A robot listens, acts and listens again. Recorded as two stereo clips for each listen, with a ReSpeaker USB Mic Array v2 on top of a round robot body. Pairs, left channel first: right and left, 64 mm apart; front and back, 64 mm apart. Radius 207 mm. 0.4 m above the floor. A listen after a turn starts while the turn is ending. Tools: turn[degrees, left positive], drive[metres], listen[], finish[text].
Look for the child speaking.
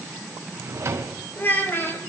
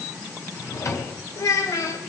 Thought: The child speaking: 35° right.
Action: turn[-35]
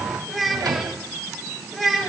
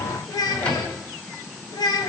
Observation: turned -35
Action: finish[Facing the child speaking.]